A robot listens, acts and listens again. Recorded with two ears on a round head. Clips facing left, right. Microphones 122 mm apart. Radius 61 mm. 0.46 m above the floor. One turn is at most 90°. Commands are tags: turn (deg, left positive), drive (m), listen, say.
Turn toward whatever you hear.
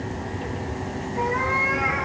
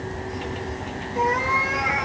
<turn deg="-60"/>
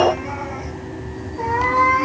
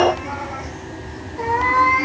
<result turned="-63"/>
<turn deg="-10"/>
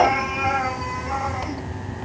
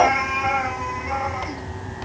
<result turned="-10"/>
<say>Found it: a cat meowing, straight ahead.</say>